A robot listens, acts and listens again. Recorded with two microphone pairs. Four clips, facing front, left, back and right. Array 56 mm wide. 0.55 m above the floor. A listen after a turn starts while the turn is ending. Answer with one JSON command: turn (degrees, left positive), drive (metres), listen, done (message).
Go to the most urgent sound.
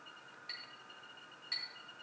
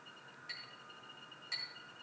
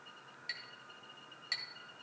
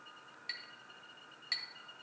{"listen": true}
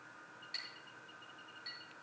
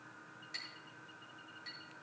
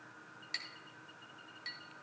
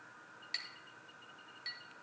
{"listen": true}
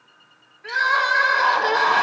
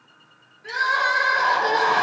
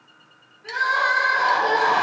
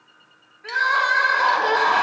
{"turn": -50}
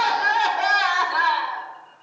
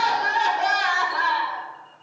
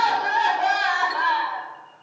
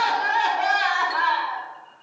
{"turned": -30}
{"turn": -20}
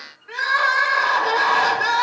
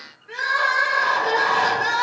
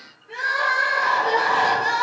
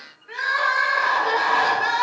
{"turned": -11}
{"turn": -10}
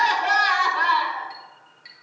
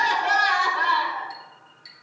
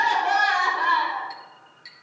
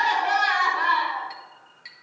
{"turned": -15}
{"drive": 1.0}
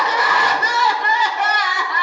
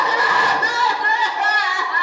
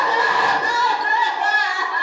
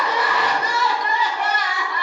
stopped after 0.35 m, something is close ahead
{"done": "Something is in my way. I am facing the crying but have not reached it."}